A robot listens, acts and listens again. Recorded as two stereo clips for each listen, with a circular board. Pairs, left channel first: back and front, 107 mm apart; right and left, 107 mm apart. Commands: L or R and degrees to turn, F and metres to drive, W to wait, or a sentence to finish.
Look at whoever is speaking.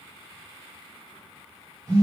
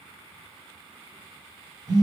W
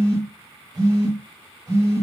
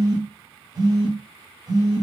W
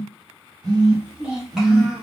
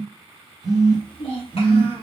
R90
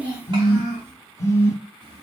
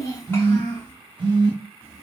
R25
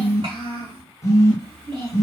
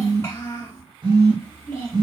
R25
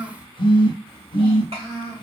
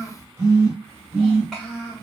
Found it: a child speaking, straight ahead, 1 to 2 m away.